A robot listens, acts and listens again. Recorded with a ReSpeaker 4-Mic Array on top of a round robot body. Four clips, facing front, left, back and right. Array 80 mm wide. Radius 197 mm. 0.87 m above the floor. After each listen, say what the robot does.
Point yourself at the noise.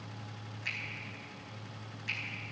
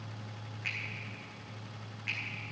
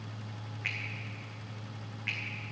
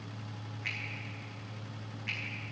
Turn 175° left.
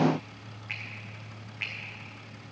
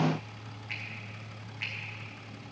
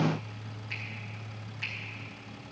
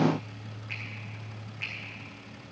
Facing the finger snap, 2 to 4 m away.